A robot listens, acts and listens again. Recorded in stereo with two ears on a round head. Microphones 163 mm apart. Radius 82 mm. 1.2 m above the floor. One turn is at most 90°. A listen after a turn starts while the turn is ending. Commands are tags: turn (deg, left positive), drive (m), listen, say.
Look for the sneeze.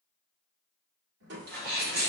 <turn deg="-60"/>
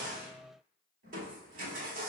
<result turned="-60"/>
<listen/>
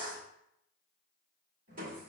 <say>I heard a sneeze, but can't make it out now. It was about straight ahead or 60° right.</say>